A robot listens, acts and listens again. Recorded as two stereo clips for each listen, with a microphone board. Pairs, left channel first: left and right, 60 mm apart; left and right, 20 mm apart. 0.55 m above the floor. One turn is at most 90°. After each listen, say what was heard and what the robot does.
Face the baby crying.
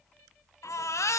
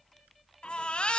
The baby crying: about 55° left or 125° left. Turn 55° left.
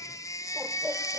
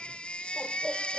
So it is at 65° left. Turn 65° left.
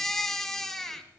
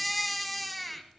Facing the baby crying, 1 to 2 m away.